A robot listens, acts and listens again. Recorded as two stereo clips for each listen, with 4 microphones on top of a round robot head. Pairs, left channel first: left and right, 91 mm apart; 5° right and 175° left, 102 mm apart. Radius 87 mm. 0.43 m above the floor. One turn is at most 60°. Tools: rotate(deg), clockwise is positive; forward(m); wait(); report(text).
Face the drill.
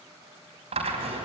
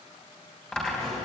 rotate(60)
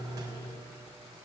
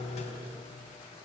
rotate(30)
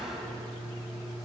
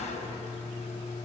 report("Facing the drill, over 4 m away.")